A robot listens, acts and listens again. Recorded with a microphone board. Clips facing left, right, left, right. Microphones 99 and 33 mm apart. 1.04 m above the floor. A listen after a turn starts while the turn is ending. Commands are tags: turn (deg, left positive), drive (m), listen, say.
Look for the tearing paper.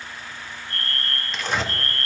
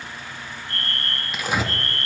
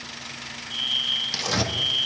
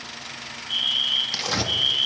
<turn deg="-30"/>
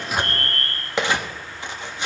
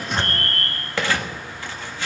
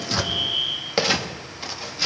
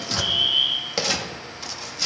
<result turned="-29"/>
<turn deg="20"/>
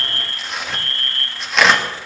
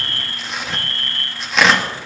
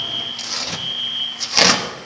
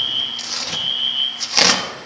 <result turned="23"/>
<say>Facing the tearing paper, 1 to 2 m away.</say>